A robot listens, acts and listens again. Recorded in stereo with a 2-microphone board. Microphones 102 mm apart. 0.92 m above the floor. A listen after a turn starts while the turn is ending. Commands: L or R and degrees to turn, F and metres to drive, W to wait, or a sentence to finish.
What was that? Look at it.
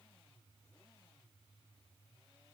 W
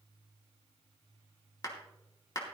L40
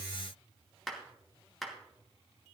Facing the clap, 2 to 4 m away.